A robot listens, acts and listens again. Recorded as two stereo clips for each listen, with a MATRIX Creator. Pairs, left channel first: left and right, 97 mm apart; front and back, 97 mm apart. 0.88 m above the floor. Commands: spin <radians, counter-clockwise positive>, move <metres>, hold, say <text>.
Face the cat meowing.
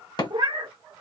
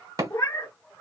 spin -0.96
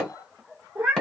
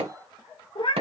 spin -0.17
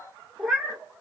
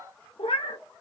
say Found it: a cat meowing, straight ahead.